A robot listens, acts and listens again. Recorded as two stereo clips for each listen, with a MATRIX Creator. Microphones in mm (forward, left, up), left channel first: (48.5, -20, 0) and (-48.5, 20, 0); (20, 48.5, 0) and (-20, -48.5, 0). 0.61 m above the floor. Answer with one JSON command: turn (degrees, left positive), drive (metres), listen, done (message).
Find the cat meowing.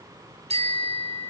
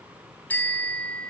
{"listen": true}
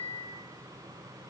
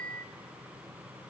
{"listen": true}
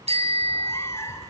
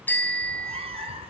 {"turn": -85}
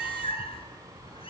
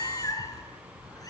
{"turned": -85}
{"turn": 15}
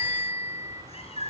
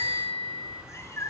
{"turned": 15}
{"done": "Found it: a cat meowing, straight ahead, 2 to 4 m away."}